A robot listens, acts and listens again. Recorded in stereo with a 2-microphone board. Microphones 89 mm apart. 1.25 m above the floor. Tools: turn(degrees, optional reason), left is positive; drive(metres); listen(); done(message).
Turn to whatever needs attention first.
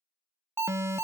turn(degrees=-30, reason="The alarm: about 30° right or 150° right.")
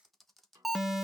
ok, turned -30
done("Facing the alarm.")